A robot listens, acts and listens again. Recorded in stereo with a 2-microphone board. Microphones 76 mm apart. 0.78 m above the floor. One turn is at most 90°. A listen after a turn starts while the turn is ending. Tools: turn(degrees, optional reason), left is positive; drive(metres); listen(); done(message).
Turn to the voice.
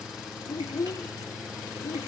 turn(degrees=45, reason="The child speaking: about 45° left or 135° left.")
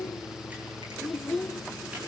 done("Facing the child speaking, 1 to 2 m away.")